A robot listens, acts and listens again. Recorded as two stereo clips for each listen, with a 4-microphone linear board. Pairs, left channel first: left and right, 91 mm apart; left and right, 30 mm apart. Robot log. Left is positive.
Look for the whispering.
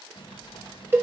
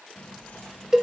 note: The whispering: about 65° left or 115° left.
cmd yaw +65
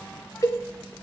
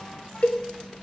note: So it is at 15° left.
cmd yaw +15
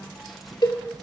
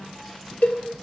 end: Found it: whispering, straight ahead.